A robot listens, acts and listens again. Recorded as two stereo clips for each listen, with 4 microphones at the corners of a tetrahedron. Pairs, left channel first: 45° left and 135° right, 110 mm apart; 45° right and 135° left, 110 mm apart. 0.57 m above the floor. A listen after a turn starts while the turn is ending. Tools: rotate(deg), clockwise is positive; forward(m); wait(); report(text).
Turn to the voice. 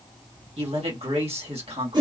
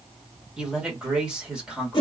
rotate(145)
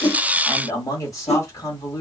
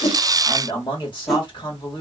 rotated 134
rotate(10)
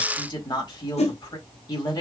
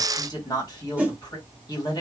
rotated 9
report("Facing the man speaking, 1 to 2 m away.")